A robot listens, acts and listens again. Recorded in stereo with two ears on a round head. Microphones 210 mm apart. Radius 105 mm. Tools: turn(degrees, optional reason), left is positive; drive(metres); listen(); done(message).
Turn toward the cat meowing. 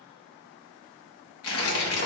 listen()
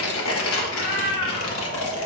turn(degrees=30)
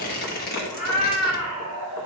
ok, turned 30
turn(degrees=-25, reason="So it is at 25° right.")
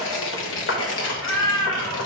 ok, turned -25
done("Found it: a cat meowing, straight ahead, over 4 m away.")